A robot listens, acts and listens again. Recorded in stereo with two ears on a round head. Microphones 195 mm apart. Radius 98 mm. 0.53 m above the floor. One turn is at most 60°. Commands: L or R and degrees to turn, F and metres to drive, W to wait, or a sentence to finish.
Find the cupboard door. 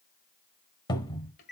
L20
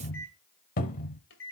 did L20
L60
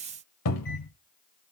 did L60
L60
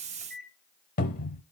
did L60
L40
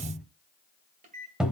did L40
Found it: a cupboard door, straight ahead.